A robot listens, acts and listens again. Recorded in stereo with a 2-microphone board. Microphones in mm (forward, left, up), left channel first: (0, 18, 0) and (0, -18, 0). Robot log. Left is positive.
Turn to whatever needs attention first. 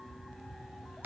cmd idle
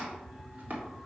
cmd idle
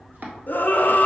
note: The scream: about 60° left or 120° left.
cmd yaw +60
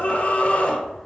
note: So it is at 45° left.
cmd yaw +45
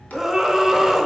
note: The scream is now 10° right.
cmd yaw -10
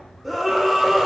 end: Found it: a scream, straight ahead, under 1 m away.